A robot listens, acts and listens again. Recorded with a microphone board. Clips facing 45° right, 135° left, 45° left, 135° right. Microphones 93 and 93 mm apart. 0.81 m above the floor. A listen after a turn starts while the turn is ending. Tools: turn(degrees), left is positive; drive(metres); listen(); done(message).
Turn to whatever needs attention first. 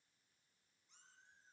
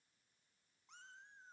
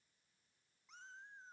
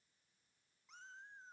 listen()
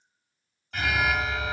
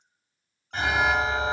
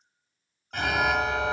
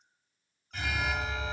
turn(degrees=75)
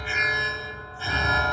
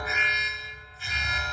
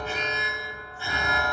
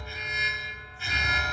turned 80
done("Facing the alarm, under 1 m away.")